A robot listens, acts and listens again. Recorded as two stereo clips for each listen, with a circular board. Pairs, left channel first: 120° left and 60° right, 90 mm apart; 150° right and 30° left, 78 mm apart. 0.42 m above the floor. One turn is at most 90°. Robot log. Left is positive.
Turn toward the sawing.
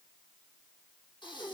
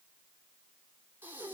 cmd idle
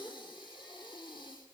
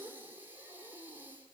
cmd idle
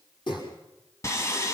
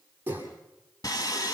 note: The sawing: 175° left.
cmd yaw +90
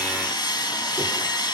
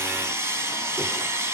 note: The sawing is now 80° left.
cmd yaw +80
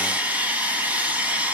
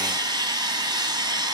note: The sawing is now 10° left.
cmd yaw +10
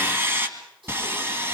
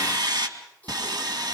end: Found it: sawing, straight ahead.